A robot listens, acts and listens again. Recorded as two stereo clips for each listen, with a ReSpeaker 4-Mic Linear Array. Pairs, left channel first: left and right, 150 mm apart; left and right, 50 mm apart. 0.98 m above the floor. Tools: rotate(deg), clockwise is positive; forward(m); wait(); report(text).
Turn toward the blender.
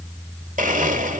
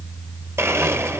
rotate(60)
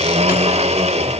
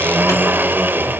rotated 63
rotate(50)
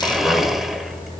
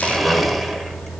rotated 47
report("Facing the blender.")